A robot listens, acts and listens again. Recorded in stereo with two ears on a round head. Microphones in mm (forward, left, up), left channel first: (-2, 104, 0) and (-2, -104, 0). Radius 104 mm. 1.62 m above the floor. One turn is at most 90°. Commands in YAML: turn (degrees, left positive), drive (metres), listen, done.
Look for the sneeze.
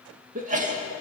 turn: -35
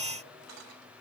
listen: true
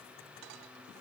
done: "I heard a sneeze, but can't make it out now. It was about straight ahead or 110° right."